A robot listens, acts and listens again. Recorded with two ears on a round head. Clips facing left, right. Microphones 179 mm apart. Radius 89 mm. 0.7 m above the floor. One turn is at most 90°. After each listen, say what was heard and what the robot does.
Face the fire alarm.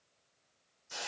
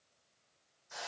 Keep listening.
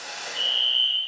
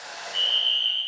The fire alarm: about 65° right or 115° right. Turn 65° right.
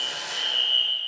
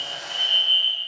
So it is at 10° right. Turn 10° right.
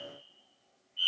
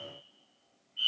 Facing the fire alarm, 2 to 4 m away.